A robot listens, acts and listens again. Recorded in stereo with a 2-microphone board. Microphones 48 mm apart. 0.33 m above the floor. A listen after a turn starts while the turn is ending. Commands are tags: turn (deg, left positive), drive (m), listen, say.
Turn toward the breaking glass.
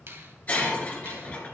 <turn deg="30"/>
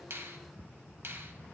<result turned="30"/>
<listen/>
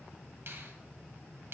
<say>I heard breaking glass, but can't make it out now. It was about straight ahead or 120° left.</say>